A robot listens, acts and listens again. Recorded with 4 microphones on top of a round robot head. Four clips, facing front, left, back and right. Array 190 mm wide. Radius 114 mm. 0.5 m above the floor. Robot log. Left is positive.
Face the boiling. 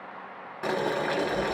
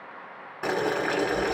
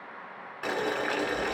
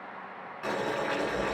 note: The boiling: 65° left.
cmd yaw +65
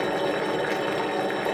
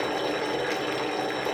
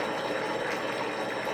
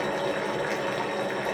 note: The boiling is now 10° left.
cmd yaw +10
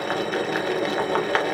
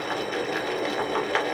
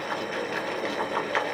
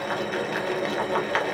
end: Facing the boiling.